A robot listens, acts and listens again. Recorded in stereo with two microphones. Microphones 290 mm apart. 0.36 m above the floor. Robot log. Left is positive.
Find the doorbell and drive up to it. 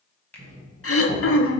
note: The doorbell: about 45° right or 135° right.
cmd yaw -45
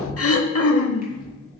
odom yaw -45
note: So it is at 80° right.
cmd yaw -80
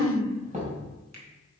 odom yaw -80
note: The doorbell is now 30° right.
cmd yaw -30
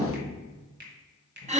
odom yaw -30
note: The doorbell is now 20° left.
cmd yaw +20
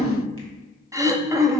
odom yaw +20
cmd idle
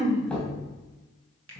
cmd fwd 1.0
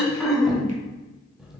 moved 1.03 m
cmd fwd 1.0
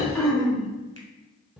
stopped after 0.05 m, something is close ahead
end: I am next to the doorbell.